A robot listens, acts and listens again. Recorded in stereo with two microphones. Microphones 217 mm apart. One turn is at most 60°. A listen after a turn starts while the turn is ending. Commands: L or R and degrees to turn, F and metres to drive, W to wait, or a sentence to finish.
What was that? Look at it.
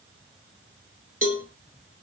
L60
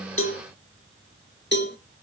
L55
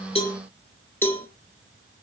L10
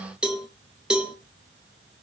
Found it: a cowbell, straight ahead.